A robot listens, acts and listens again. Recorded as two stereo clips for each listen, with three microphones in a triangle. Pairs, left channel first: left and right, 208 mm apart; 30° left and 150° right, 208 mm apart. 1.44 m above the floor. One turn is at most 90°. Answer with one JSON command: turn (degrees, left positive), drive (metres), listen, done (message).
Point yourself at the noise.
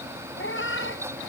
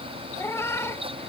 {"turn": 90}
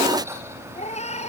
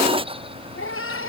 {"turn": 30}
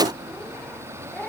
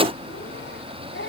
{"done": "Found it: a cat meowing, straight ahead."}